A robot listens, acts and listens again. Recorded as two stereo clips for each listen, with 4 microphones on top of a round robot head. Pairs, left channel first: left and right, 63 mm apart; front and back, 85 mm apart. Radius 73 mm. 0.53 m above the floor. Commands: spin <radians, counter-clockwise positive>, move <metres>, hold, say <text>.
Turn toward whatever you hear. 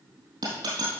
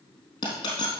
spin -0.96
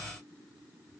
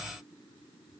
say I heard a dropped coin from this way, but can't make it out now.